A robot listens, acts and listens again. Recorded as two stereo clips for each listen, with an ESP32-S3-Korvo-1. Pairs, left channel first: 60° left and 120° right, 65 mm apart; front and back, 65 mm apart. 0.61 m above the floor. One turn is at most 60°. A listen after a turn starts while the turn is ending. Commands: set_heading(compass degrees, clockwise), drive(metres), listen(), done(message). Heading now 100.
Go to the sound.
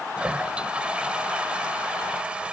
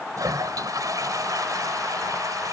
set_heading(40)
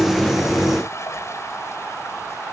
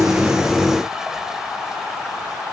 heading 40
set_heading(340)
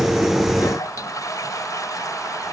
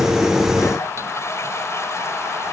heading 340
set_heading(300)
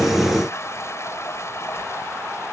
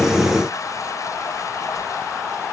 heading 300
set_heading(280)
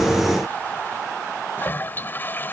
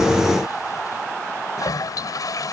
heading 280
drive(1.0)
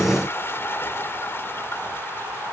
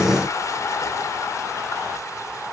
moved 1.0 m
set_heading(265)
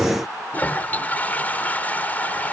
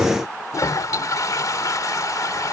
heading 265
drive(1.0)
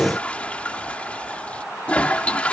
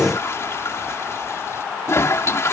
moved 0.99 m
drive(1.0)
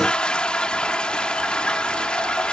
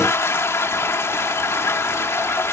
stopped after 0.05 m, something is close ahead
set_heading(275)
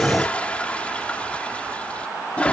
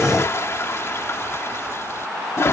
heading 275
done("Arrived at the toilet flushing, straight ahead.")